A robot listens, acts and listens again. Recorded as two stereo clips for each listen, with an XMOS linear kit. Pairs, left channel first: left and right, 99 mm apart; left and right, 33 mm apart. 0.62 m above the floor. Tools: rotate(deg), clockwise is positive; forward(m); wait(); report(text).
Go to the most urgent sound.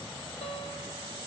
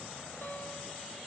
wait()
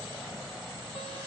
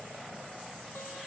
wait()
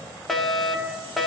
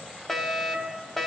rotate(-30)
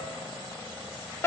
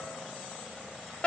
rotate(-150)
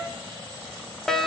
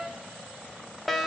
forward(1.0)
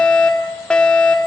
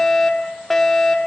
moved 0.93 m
rotate(-10)
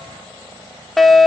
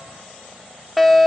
forward(1.0)
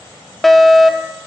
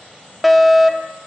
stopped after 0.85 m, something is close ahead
report("Arrived at the fire alarm, straight ahead.")